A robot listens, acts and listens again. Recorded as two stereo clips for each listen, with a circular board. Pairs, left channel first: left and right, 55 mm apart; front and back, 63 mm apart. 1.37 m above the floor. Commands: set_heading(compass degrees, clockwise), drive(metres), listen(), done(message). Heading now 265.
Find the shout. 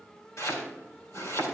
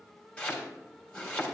listen()
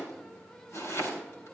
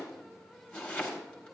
listen()
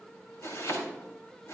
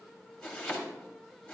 done("I can't make out a shout to turn to.")